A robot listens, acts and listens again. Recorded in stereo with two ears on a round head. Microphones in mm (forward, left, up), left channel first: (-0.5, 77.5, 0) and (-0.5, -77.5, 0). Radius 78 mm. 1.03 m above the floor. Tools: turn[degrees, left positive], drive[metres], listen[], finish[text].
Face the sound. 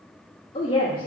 Thought: The woman speaking: about 30° left or 150° left.
Action: turn[30]
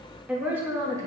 Thought: So it is at 25° right.
Action: turn[-25]
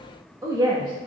Thought: The woman speaking is now 25° right.
Action: turn[-25]
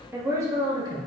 Thought: The woman speaking is now 25° right.
Action: turn[-25]
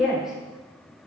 Action: finish[Found it: a woman speaking, straight ahead.]